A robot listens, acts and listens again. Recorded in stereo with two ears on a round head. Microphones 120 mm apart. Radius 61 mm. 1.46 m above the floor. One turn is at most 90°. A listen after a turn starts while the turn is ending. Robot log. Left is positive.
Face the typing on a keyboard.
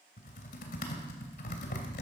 note: The typing on a keyboard: about 70° left or 110° left.
cmd yaw +70
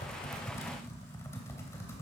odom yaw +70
note: So it is at 20° left.
cmd yaw +20
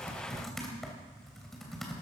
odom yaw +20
end: Found it: typing on a keyboard, straight ahead.